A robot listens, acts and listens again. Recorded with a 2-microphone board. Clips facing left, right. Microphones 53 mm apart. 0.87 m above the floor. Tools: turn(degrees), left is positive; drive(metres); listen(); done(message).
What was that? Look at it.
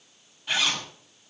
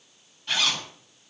turn(degrees=30)
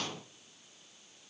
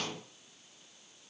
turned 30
listen()
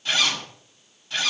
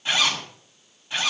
turn(degrees=-20)
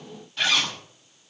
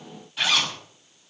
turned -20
done("Facing the zipper.")